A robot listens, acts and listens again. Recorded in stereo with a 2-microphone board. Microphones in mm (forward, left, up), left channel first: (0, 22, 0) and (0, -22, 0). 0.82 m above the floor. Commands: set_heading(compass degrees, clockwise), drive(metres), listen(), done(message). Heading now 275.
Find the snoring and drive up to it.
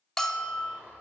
set_heading(340)
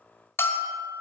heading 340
listen()
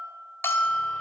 listen()
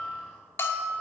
done("I heard snoring, but can't make it out now. It was about straight ahead or 50° right. I did not reach it.")